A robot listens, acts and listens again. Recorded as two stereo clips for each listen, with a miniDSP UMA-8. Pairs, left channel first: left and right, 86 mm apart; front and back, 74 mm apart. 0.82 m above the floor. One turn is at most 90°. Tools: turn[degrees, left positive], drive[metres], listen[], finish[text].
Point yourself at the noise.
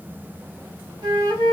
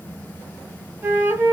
Thought: The flute: 120° right.
Action: turn[-90]
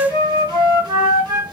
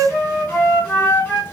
Thought: The flute is now 65° right.
Action: turn[-65]
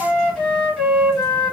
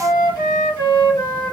Action: finish[Facing the flute, 2 to 4 m away.]